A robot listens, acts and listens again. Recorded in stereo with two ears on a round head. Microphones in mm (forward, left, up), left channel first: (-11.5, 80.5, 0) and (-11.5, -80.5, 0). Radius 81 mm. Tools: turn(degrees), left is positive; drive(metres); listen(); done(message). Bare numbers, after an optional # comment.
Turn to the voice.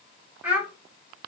turn(-30)
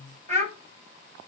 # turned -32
# So it is at 140° right.
turn(-140)
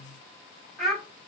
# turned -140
done("Found it: a child speaking, straight ahead.")